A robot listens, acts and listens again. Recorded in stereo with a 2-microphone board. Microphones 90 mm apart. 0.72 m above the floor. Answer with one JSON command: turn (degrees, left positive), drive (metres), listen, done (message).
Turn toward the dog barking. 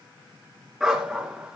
{"turn": -30}
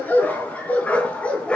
{"turn": 10}
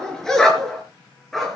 {"done": "Facing the dog barking."}